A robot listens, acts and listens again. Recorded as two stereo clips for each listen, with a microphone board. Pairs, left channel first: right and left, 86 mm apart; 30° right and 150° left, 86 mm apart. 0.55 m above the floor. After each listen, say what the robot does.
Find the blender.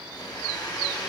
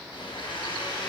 Turn 45° right.
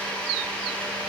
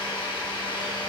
Turn 15° right.
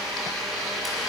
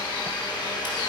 Facing the blender.